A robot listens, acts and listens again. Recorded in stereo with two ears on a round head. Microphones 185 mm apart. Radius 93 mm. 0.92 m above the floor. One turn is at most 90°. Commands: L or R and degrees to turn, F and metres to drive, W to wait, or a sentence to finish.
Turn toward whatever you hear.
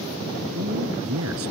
R90
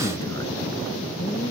W
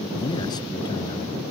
W
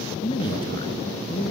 L25
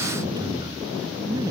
R20
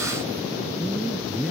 Facing the man speaking.